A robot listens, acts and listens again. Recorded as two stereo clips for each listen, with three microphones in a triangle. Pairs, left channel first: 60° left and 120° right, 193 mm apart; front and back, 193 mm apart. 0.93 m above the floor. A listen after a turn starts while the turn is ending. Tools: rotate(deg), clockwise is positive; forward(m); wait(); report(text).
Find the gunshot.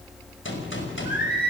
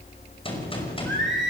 rotate(-60)
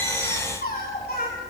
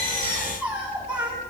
report("Facing where the gunshot came from. I can't hear it now.")